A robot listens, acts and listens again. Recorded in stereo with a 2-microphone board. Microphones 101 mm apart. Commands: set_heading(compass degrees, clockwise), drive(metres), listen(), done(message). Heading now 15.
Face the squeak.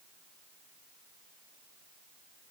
listen()
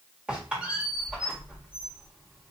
set_heading(45)
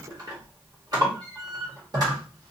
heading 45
set_heading(185)
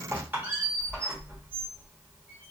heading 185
set_heading(205)
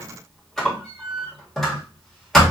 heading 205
done("Found it: a squeak, straight ahead, 1 to 2 m away.")